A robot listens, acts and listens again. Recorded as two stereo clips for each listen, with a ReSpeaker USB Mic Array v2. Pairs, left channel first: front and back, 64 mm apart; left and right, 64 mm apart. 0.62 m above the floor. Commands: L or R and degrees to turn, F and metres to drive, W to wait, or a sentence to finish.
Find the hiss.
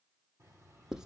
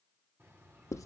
W
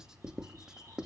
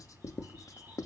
W
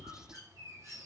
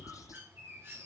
I can't make out a hiss, only writing and a bird.